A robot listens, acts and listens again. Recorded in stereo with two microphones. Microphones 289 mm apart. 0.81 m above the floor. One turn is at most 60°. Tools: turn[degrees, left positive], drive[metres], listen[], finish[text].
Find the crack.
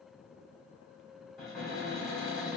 Action: listen[]
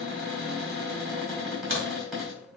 Thought: The crack: about 45° right or 135° right.
Action: turn[-45]
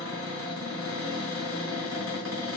Action: listen[]
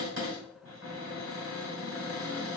Action: finish[I heard a crack, but can't make it out now. It was about straight ahead or 90° right.]